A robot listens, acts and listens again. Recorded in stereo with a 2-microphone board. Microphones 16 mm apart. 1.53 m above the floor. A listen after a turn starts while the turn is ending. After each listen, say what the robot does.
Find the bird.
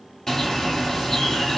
Turn 40° left.
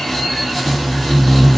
Facing the bird, 2 to 4 m away.